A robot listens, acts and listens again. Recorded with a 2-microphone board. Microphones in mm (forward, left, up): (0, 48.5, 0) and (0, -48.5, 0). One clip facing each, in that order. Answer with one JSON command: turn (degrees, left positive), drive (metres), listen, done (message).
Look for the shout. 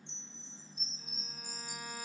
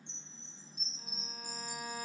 {"listen": true}
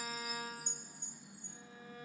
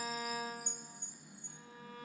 {"listen": true}
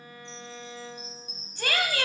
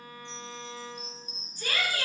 {"turn": 70}
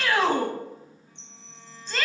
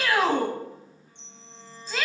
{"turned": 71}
{"done": "Facing the shout, under 1 m away."}